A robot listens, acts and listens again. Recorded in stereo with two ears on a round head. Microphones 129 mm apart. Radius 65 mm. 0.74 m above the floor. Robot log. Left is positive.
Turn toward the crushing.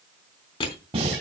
note: The crushing: about 40° left or 140° left.
cmd yaw +40
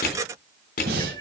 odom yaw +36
note: So it is at 105° left.
cmd yaw +105
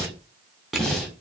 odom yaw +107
end: Found it: crushing, straight ahead, 2 to 4 m away.